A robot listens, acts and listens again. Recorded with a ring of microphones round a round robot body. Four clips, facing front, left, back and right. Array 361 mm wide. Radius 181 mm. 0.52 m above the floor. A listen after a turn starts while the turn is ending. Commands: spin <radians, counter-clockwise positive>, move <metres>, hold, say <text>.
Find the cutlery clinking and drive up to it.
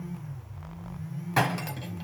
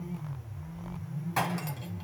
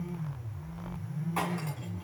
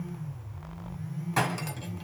move 1.0
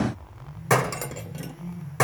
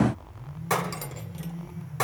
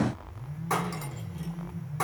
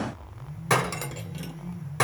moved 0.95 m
spin -0.17
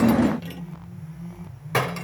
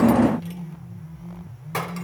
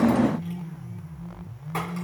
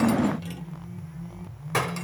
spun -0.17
move 1.0
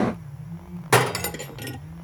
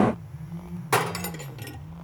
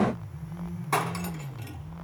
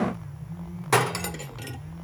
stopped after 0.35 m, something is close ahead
say I am next to the cutlery clinking.